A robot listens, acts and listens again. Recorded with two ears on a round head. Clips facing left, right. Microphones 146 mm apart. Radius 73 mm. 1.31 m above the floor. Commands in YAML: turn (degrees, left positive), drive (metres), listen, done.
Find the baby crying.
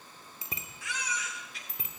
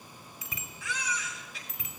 turn: -70
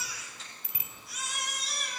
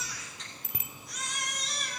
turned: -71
done: "Facing the baby crying."